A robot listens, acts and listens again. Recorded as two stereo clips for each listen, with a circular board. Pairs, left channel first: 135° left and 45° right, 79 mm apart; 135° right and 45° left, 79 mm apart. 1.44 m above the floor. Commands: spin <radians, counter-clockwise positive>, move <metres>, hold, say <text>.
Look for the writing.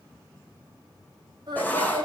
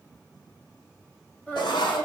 spin -2.71
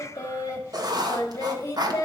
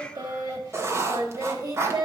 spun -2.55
spin -0.17
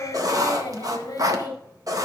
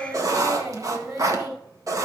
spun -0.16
say Facing the writing, 1 to 2 m away.